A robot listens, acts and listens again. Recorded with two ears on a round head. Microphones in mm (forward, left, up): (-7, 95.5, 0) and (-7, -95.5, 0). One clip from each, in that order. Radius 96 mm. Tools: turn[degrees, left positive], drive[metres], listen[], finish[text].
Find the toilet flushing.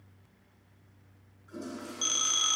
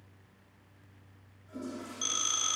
Thought: The toilet flushing: about 50° left or 130° left.
Action: turn[50]
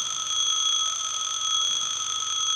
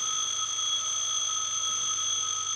Action: listen[]
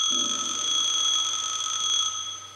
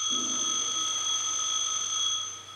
Action: listen[]
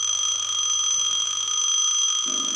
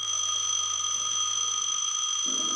Action: finish[I heard a toilet flushing, but can't make it out now. It was about straight ahead or 80° left.]